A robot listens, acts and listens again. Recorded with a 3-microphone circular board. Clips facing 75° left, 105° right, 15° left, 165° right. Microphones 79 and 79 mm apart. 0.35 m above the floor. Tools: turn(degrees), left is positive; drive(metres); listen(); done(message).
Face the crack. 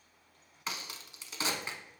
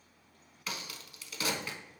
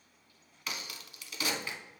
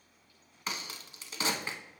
turn(degrees=135)
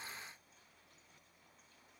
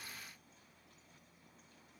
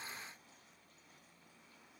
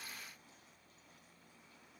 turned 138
done("Facing where the crack came from. I can't hear it now.")